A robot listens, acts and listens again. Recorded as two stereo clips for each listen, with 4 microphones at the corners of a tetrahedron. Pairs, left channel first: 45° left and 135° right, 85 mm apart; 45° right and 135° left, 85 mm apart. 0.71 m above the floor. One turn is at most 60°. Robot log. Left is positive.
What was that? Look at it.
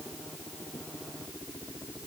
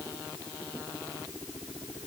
cmd idle
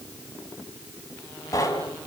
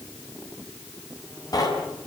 end: Found it: knocking, straight ahead, over 4 m away.